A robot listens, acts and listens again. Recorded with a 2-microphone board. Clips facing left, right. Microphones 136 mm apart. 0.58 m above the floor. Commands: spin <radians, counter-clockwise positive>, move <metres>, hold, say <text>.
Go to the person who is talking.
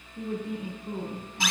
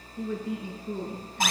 spin 0.87
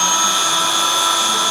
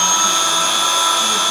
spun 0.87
hold
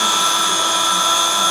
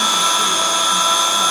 hold
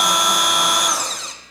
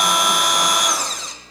say I heard a woman speaking, but can't make it out now. It was about straight ahead or 80° left. I did not reach it.